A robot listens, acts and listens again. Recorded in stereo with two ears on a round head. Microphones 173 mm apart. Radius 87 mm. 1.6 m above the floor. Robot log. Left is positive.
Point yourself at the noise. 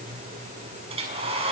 note: The hair dryer: about 35° right or 145° right.
cmd yaw -35
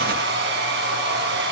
note: So it is at 110° right.
cmd yaw -110
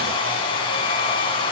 note: The hair dryer is now 30° left.
cmd yaw +30
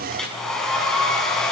end: Facing the hair dryer.